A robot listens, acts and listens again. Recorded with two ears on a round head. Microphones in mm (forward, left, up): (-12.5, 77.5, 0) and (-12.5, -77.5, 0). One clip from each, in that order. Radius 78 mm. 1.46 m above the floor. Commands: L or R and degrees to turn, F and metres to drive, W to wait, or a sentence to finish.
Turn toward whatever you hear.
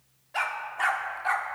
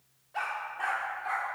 L55
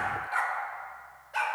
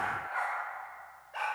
L65
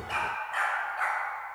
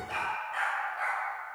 L20
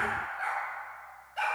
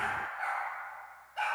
Found it: a dog barking, straight ahead.